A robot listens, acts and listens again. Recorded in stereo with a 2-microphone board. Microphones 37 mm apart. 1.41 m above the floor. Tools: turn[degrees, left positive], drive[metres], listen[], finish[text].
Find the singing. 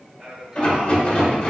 Action: turn[-30]
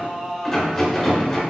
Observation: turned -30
Action: turn[-30]
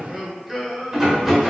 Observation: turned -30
Action: turn[-30]
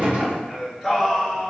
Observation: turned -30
Action: turn[30]
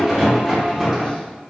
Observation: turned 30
Action: listen[]
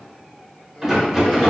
Action: listen[]
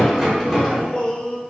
Thought: The singing: about 30° left or 150° left.
Action: turn[30]
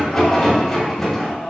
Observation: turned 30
Thought: So it is at 130° left.
Action: turn[130]
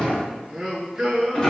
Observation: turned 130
Thought: The singing is now 15° right.
Action: turn[-15]
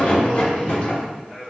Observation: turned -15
Action: finish[Facing the singing, 1 to 2 m away.]